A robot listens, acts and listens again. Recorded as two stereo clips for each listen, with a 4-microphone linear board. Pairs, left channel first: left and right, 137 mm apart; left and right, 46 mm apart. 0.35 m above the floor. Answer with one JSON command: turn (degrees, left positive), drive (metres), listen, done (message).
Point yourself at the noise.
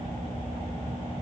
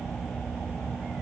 {"listen": true}
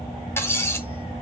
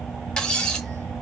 {"turn": 20}
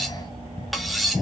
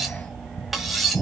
{"done": "Facing the cutlery clinking, 1 to 2 m away."}